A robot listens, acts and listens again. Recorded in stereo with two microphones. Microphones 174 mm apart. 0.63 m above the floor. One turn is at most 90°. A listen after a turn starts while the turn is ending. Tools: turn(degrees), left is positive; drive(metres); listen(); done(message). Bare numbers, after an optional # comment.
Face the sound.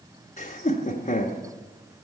# The laughter: about 45° left or 135° left.
turn(45)
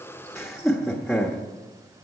done("Facing the laughter.")